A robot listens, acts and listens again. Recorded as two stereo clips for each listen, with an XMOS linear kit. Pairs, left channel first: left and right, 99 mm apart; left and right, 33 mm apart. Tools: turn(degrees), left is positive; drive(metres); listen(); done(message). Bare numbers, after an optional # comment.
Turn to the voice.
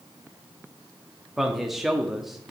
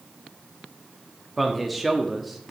turn(30)
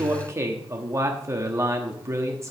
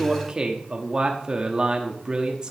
# So it is at 35° right.
turn(-35)
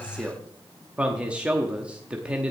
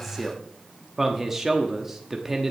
# The man speaking is now 10° right.
turn(-10)
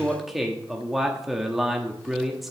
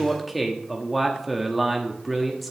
done("Facing the man speaking.")